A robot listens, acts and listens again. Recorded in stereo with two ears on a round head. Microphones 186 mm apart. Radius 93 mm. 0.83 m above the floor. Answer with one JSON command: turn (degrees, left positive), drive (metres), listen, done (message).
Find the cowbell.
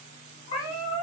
{"listen": true}
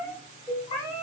{"turn": -25}
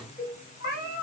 {"done": "Facing the cowbell."}